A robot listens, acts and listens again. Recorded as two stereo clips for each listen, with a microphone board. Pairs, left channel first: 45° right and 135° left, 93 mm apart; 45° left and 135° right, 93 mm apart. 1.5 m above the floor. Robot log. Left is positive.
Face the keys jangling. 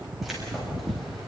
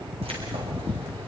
note: The keys jangling: 135° right.
cmd yaw -135
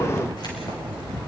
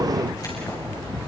end: Facing the keys jangling.